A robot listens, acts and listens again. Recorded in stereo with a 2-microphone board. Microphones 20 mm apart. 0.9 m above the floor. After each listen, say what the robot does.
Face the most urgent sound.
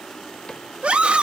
Turn 55° right.
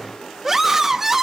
Turn 10° right.
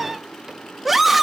Facing the scream, 1 to 2 m away.